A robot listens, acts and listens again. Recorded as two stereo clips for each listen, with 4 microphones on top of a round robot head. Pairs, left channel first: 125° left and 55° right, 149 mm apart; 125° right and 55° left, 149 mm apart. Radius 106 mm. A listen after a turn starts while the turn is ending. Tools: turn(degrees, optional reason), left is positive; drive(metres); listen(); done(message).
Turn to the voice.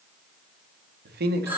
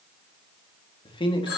turn(degrees=-65, reason="The man speaking: 65° right.")
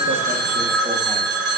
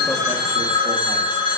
listen()
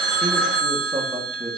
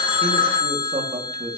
done("Facing the man speaking, 2 to 4 m away.")